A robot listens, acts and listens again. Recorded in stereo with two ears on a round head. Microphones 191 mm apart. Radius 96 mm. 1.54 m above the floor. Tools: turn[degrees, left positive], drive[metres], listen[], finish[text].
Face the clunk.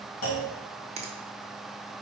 Thought: The clunk: about 75° left or 105° left.
Action: turn[75]
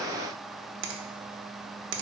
Action: listen[]
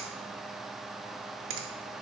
Action: finish[I heard a clunk, but can't make it out now. It was about straight ahead or 30° left.]